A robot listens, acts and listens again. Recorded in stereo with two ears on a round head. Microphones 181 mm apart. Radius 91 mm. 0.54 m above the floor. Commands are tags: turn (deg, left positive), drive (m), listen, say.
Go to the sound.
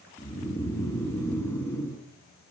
<turn deg="30"/>
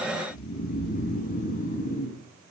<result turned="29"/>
<turn deg="140"/>
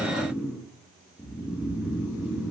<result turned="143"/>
<drive m="1.0"/>
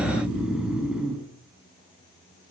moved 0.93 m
<drive m="1.0"/>
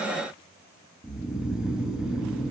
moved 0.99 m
<drive m="1.0"/>
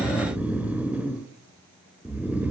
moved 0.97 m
<turn deg="-10"/>
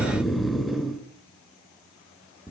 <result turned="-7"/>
<drive m="1.0"/>
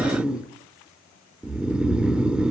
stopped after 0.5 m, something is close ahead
<say>I am next to the snoring.</say>